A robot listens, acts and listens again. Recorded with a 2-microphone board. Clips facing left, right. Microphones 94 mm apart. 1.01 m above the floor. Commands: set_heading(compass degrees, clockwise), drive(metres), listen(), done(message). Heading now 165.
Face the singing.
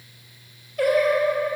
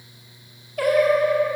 set_heading(255)
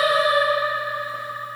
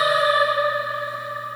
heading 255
set_heading(300)
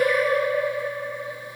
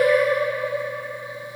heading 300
set_heading(310)
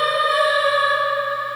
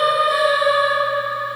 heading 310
set_heading(320)
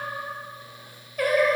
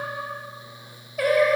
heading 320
done("Facing the singing, 2 to 4 m away.")